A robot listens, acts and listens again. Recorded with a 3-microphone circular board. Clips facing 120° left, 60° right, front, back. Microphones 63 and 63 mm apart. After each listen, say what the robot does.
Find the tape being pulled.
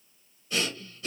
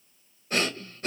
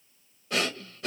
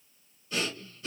Keep listening.
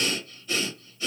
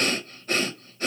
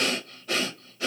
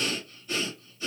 Keep listening.
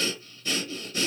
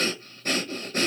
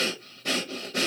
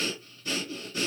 I can't make out tape being pulled to turn to.